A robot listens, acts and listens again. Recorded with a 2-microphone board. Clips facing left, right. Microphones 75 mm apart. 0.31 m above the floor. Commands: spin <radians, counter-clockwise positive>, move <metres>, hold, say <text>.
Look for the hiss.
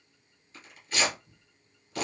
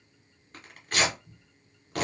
hold
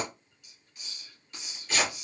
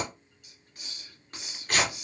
spin -0.87
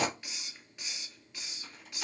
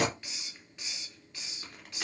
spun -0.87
say Facing the hiss, under 1 m away.